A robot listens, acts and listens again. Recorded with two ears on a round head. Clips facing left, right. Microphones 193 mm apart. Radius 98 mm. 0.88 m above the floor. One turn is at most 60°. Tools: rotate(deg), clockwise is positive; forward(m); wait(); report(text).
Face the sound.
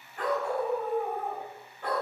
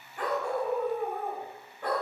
rotate(60)
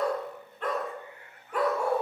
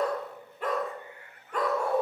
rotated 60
rotate(-10)
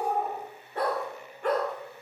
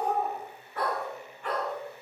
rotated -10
rotate(-40)
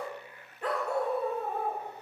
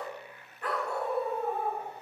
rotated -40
rotate(-20)
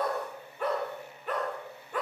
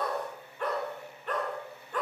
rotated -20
report("Found it: a dog barking, straight ahead, 1 to 2 m away.")